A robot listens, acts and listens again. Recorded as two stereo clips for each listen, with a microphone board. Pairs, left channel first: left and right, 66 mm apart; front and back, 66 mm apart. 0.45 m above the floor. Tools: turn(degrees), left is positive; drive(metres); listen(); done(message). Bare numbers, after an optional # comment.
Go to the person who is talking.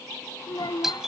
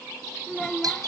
# The child speaking: 80° left.
turn(80)
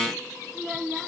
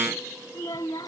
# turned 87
drive(1.0)
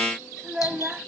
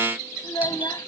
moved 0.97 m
# The child speaking is now 15° right.
turn(-15)
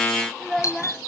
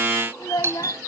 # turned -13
drive(1.0)
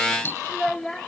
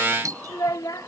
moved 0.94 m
# The child speaking is now 10° left.
turn(10)
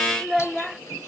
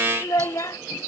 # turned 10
drive(1.0)
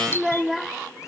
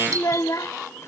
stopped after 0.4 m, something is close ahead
done("I am next to the child speaking.")